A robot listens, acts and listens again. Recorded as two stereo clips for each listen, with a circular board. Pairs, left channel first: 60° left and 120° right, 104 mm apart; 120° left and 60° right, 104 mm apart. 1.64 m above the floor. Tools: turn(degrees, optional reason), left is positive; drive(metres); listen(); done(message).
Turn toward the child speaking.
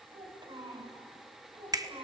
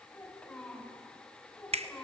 turn(degrees=-160, reason="The child speaking: 160° right.")
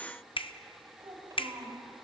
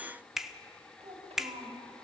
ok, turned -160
turn(degrees=-65, reason="The child speaking is now 65° right.")
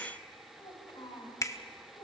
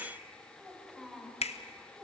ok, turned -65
turn(degrees=25, reason="The child speaking is now 25° left.")
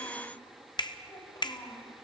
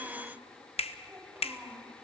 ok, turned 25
turn(degrees=10, reason="The child speaking is now 10° left.")
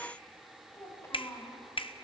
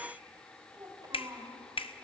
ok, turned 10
done("Found it: a child speaking, straight ahead, 2 to 4 m away.")